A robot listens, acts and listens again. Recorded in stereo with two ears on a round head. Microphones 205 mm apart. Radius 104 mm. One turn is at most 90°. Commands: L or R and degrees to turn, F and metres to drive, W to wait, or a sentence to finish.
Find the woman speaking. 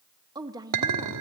R15
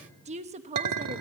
R90
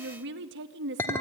R60
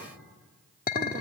W
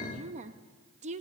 R35
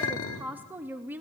R10
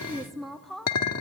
Facing the woman speaking, under 1 m away.